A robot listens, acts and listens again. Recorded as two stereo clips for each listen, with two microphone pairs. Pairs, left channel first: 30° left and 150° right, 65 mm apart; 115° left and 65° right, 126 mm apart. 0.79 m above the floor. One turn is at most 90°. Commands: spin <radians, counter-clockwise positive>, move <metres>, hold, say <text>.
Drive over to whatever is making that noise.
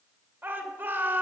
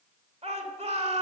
spin -1.57
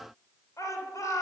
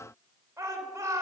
move 1.0
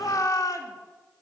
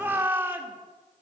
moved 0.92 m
spin 0.17
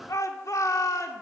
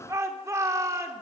move 1.0
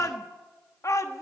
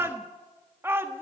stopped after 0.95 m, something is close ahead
spin 0.17
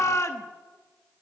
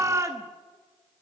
say Arrived at the shout, straight ahead.